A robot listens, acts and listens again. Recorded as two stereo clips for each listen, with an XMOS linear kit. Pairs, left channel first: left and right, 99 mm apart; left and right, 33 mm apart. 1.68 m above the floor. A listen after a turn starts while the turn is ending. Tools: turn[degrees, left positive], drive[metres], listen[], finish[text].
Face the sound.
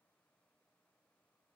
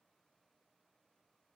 Action: listen[]
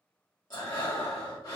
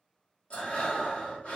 Thought: The breathing: about 40° left or 140° left.
Action: turn[40]
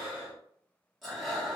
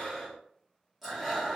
Action: finish[Facing the breathing, 1 to 2 m away.]